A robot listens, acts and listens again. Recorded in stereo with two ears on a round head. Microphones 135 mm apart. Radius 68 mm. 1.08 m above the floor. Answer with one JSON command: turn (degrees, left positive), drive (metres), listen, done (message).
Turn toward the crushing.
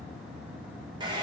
{"listen": true}
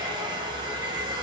{"listen": true}
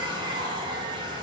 {"done": "I can't make out crushing, only a hair dryer."}